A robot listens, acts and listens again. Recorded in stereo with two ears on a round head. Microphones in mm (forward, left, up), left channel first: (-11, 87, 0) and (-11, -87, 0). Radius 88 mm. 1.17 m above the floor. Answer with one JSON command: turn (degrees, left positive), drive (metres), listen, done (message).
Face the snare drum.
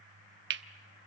{"listen": true}
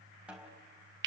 {"turn": -30}
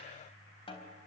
{"turn": 25}
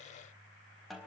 {"done": "Found it: a snare drum, straight ahead, 2 to 4 m away."}